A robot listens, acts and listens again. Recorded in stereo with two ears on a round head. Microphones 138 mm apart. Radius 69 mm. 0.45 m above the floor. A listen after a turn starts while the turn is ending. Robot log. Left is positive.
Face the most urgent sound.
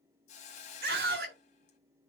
note: The scream: about 70° right or 110° right.
cmd yaw -70
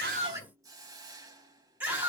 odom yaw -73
note: So it is at 10° right.
cmd yaw -10
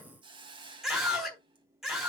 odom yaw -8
end: Found it: a scream, straight ahead.